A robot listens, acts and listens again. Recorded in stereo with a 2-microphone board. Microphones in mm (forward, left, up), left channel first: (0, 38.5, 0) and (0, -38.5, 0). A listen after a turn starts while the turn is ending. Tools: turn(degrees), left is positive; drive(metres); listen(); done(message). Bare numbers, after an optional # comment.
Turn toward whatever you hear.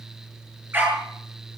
# The dog barking: about 30° right or 150° right.
turn(-30)
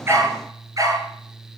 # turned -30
# So it is at 125° right.
turn(-125)
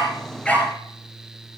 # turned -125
# The dog barking is now 15° left.
turn(15)
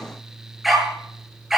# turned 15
done("Found it: a dog barking, straight ahead, over 4 m away.")